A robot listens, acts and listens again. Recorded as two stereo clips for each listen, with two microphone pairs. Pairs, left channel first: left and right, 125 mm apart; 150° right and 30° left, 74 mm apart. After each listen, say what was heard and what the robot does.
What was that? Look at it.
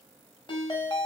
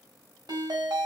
The ringtone: 40° left. Turn 40° left.
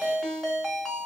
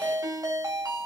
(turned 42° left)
Found it: a ringtone, straight ahead.